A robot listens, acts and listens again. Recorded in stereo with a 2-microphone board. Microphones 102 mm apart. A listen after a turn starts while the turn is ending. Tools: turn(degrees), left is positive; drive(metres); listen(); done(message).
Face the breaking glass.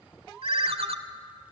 listen()
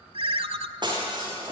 turn(degrees=-45)
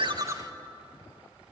listen()
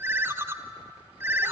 done("I heard breaking glass, but can't make it out now. It was about straight ahead or 90° right.")